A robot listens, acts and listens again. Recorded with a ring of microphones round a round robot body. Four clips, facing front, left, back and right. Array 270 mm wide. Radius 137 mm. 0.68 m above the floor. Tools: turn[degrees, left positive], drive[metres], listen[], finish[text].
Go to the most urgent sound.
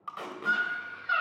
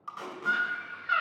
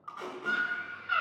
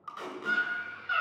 Thought: The scream: 20° left.
Action: turn[20]
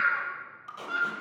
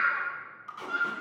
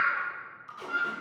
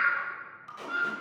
Action: drive[1.0]
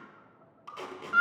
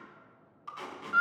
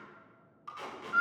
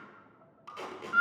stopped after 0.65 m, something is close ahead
Action: finish[Something is in my way. I am facing the scream but have not reached it.]